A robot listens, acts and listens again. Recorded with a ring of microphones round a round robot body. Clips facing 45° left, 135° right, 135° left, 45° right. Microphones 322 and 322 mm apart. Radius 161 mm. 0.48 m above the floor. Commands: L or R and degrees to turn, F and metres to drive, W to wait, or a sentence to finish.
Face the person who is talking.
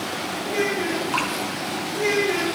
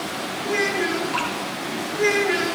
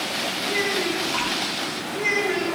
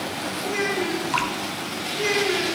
R80
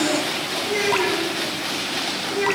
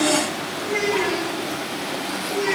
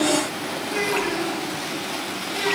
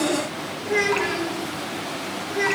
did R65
R15
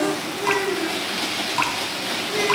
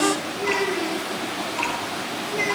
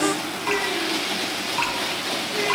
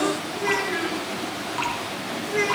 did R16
W
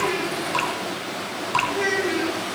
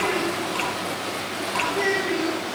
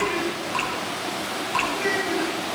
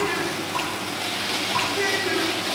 Found it: a child speaking, straight ahead, 2 to 4 m away.